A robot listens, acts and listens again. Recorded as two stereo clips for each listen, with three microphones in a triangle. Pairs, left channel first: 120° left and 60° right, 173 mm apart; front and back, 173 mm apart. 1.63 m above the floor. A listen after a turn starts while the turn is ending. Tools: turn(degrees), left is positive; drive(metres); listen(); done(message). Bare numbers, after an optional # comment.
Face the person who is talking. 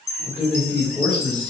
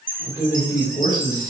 # The man speaking: 35° left.
turn(35)
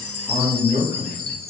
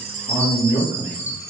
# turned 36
# The man speaking is now 20° right.
turn(-20)
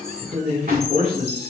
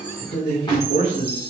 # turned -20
# The man speaking is now 20° right.
turn(-20)
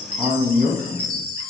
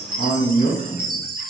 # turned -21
# The man speaking is now 10° right.
turn(-10)
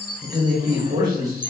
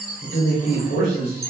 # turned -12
# The man speaking is now 15° right.
turn(-15)
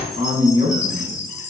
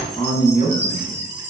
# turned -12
done("Found it: a man speaking, straight ahead.")